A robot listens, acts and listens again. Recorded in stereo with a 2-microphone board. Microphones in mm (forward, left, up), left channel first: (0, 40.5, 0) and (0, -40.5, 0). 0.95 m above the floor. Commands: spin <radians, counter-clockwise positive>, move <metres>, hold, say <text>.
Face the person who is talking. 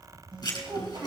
spin -0.96
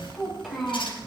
say Facing the child speaking.